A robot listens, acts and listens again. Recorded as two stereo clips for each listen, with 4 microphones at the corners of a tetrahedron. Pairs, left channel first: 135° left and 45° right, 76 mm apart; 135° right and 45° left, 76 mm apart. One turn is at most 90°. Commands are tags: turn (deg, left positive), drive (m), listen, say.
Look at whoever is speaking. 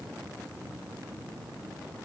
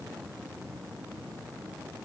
<listen/>
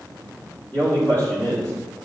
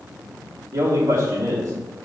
<turn deg="75"/>
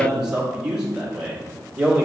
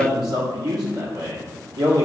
<turn deg="35"/>
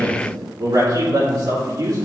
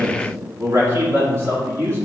<turn deg="-10"/>
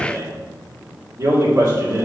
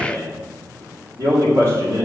<say>Facing the man speaking.</say>